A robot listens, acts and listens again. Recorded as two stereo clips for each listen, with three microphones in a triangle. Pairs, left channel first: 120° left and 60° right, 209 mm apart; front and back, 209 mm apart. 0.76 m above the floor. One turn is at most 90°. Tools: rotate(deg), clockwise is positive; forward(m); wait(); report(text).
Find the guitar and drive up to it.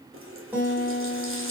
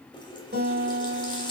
rotate(90)
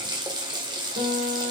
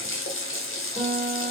rotate(60)
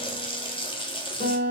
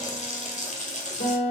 rotate(20)
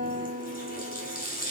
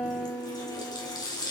forward(1.0)
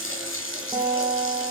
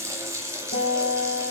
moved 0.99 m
forward(1.0)
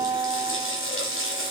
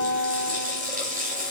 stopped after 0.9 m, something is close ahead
rotate(-15)
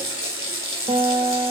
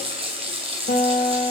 report("I am next to the guitar.")